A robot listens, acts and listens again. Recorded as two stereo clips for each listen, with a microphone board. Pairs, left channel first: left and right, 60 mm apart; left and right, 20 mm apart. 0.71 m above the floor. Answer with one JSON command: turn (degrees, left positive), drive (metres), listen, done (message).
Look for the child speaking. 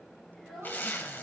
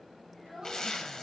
{"turn": 30}
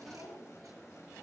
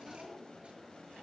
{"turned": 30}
{"listen": true}
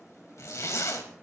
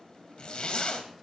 {"listen": true}
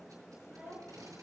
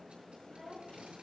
{"turn": -25}
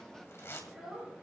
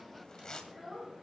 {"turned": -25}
{"turn": -10}
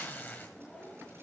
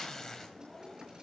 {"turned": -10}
{"done": "Facing the child speaking."}